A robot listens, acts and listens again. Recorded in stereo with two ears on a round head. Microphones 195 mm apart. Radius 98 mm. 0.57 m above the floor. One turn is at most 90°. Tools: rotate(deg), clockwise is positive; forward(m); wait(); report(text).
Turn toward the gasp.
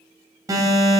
wait()
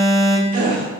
rotate(40)
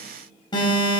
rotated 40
wait()
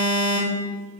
report("I heard a gasp, but can't make it out now. It was about straight ahead or 100° right.")